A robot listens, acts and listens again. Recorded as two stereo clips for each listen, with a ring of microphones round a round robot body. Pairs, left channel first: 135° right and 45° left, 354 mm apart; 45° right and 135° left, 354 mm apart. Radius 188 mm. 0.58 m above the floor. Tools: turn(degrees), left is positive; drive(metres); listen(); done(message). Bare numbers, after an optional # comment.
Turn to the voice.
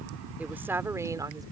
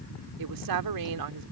# The woman speaking: 125° left.
turn(125)
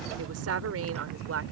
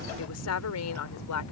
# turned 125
done("Found it: a woman speaking, straight ahead.")